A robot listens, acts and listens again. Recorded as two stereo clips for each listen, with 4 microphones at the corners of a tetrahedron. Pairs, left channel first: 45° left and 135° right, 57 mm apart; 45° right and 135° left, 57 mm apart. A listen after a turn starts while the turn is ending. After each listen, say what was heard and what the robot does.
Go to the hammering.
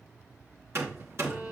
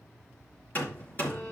The hammering: 100° right. Turn 100° right.
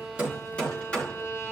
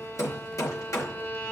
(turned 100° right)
The hammering is now 25° right. Turn 25° right.
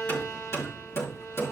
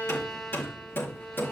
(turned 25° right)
Drive 1.0 m forward.
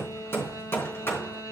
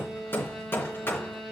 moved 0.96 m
Drive 1.0 m forward.
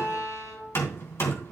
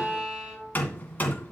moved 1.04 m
The hammering is now 10° left. Turn 10° left.
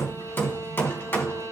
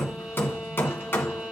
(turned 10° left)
Drive 1.0 m forward.
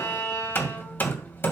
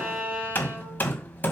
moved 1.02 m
Drive 1.0 m forward.
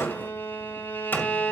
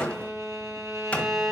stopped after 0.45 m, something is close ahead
The hammering is now 10° left. Turn 10° left.
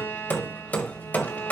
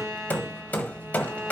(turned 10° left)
I am next to the hammering.